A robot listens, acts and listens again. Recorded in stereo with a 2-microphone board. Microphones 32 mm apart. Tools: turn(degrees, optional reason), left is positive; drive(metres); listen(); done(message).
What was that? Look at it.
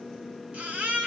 turn(degrees=-40, reason="The baby crying: about 40° right or 140° right.")
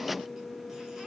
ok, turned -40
listen()
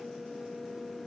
listen()
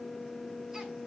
done("I heard a baby crying, but can't make it out now. It was about straight ahead or 100° right.")